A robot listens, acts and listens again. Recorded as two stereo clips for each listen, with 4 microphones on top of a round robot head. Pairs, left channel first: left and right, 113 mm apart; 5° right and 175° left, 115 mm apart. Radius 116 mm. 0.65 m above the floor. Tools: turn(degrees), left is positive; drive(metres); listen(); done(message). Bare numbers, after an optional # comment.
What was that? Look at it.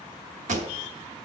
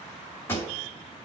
# The pop: 75° right.
turn(-75)
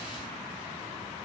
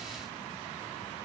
done("I heard a pop from this way, but can't make it out now.")